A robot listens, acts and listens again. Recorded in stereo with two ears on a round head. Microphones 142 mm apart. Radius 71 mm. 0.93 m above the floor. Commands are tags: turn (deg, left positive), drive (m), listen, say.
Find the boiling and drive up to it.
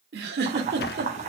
<turn deg="-45"/>
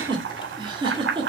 <turn deg="-90"/>
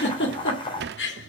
<turn deg="30"/>
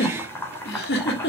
<turn deg="15"/>
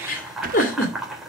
<drive m="1.0"/>
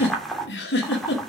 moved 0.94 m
<drive m="1.0"/>
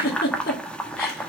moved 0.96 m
<drive m="1.0"/>
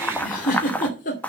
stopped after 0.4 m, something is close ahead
<turn deg="10"/>
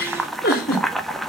<say>Arrived at the boiling, straight ahead.</say>